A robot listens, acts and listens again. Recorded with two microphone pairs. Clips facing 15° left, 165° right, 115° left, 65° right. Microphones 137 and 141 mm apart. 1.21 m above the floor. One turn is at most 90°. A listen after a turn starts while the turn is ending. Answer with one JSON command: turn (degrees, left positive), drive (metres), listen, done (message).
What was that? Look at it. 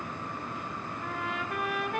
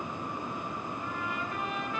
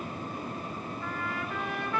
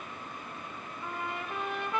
{"done": "Facing the trumpet."}